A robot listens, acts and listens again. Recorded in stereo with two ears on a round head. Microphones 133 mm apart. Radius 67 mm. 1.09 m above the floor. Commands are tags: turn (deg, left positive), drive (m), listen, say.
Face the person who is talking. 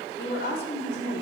<turn deg="90"/>
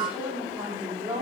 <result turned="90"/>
<turn deg="-15"/>
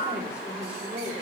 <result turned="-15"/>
<turn deg="-10"/>
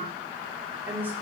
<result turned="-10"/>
<turn deg="-15"/>
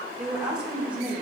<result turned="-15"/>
<turn deg="-10"/>
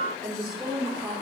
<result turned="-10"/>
<say>Facing the woman speaking, 2 to 4 m away.</say>